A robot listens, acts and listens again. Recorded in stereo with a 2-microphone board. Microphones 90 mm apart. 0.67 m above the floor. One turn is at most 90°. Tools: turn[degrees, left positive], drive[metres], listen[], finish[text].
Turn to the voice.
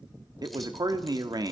Thought: The man speaking: about 45° right or 135° right.
Action: turn[-45]
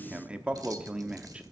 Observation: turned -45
Thought: So it is at 15° right.
Action: turn[-15]
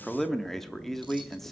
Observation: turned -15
Action: finish[Facing the man speaking, under 1 m away.]